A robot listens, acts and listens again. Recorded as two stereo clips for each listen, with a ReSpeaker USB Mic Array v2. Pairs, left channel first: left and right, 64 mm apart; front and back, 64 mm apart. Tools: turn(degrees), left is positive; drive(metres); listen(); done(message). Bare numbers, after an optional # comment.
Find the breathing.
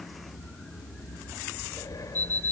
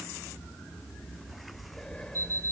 # The breathing: 80° left.
turn(80)
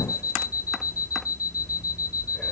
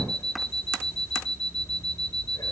listen()
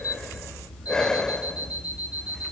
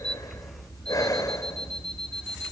# The breathing is now 10° left.
turn(10)
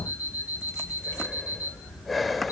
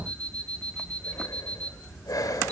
done("Facing the breathing.")